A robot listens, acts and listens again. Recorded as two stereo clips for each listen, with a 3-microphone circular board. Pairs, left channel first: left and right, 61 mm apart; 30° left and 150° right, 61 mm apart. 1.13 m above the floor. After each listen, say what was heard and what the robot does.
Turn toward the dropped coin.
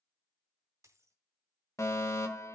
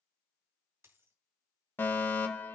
The dropped coin: 110° right. Turn 110° right.
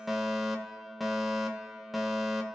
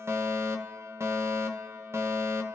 Facing where the dropped coin came from. I can't hear it now.